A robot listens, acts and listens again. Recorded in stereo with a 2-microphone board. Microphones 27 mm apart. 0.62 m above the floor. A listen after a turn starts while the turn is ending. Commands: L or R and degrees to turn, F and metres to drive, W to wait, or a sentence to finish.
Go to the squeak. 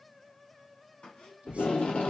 L50
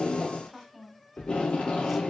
W
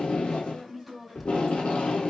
W
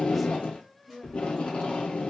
I heard a squeak, but can't make it out now. It was about straight ahead or 80° left. I did not reach it.